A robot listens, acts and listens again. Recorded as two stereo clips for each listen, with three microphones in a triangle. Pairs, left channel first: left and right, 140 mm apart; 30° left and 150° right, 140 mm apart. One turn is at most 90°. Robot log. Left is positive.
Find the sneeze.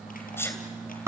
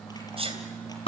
note: The sneeze: 165° left.
cmd yaw +90
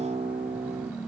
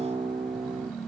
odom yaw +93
note: Nothing new. It was at 70° left.
cmd yaw +70
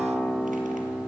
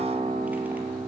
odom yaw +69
end: I heard a sneeze from this way, but can't make it out now.